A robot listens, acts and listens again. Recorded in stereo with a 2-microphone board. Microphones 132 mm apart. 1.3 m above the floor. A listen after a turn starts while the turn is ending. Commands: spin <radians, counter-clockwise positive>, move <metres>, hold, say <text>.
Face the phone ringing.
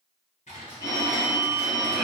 spin 0.44
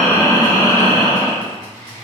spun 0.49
hold
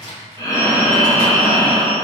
hold
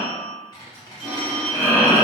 say Facing the phone ringing, 1 to 2 m away.